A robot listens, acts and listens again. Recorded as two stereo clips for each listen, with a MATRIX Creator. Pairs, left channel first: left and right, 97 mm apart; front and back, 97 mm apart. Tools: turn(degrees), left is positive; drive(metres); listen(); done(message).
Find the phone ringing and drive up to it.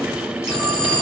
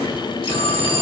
turn(degrees=-10)
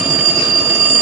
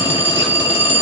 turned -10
drive(metres=1.0)
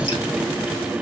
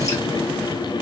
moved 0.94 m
listen()
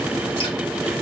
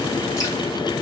listen()
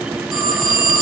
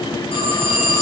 drive(metres=1.0)
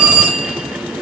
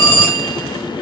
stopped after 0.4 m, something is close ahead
turn(degrees=-10)
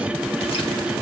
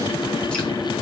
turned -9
listen()
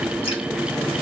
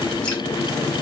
listen()
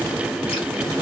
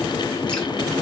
done("I heard a phone ringing from this way, but can't make it out now. I did not reach it.")